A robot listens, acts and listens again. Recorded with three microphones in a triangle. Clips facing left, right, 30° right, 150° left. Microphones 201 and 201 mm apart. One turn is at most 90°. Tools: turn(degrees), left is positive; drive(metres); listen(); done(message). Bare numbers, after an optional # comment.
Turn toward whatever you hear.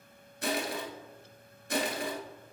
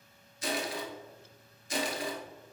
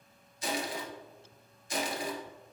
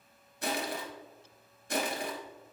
# The crushing: 120° left.
turn(90)
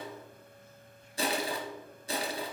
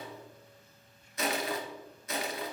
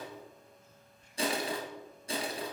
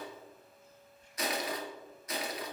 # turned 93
# The crushing is now 30° left.
turn(30)
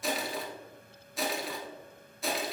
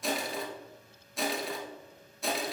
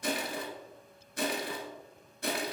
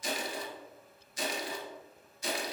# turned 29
done("Facing the crushing.")